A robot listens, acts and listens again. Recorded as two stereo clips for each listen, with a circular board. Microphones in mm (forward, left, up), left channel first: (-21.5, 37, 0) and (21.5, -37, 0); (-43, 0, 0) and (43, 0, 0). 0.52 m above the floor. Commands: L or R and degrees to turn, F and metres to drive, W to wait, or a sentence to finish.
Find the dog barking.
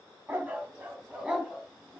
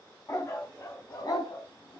R145
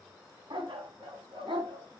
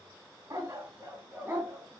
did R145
R65
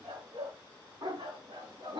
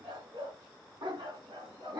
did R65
R35
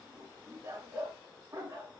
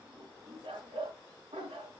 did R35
Facing the dog barking, 2 to 4 m away.